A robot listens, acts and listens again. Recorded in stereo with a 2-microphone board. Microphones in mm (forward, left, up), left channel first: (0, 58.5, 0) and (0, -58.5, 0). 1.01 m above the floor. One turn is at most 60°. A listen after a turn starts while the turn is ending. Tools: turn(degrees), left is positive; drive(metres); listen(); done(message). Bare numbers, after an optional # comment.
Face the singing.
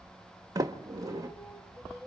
# The singing: about 45° left or 135° left.
turn(45)
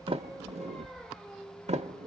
# So it is at 15° left.
turn(15)
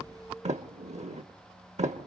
done("Facing the singing.")